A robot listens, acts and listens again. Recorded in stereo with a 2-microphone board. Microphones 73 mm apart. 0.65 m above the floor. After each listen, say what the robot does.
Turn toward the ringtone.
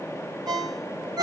Turn 90° right.
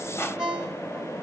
Turn 15° right.
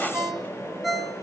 Facing the ringtone.